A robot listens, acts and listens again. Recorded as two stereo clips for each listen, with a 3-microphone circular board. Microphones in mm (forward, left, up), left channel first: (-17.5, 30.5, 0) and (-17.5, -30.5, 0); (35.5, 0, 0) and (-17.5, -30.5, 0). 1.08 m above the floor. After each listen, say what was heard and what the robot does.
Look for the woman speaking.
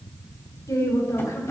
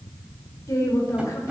The woman speaking: 65° left. Turn 65° left.
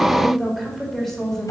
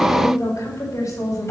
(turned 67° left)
Found it: a woman speaking, straight ahead.